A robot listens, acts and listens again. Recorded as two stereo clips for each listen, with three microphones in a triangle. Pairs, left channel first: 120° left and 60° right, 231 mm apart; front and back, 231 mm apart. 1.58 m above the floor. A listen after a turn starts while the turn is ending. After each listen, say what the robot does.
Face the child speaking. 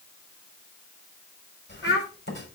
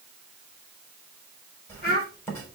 Turn 135° left.
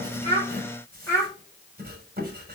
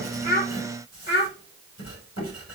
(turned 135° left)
Turn 40° left.
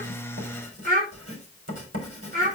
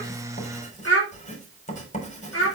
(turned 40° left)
Found it: a child speaking, straight ahead, 2 to 4 m away.